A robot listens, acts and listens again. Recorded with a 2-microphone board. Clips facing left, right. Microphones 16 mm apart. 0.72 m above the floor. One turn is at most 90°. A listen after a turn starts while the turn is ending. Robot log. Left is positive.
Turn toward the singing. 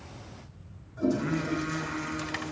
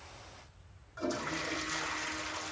cmd yaw -30
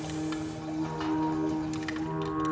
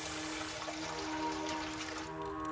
note: So it is at 20° left.
cmd yaw +20
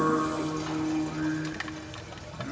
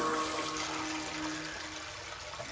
end: Facing the singing.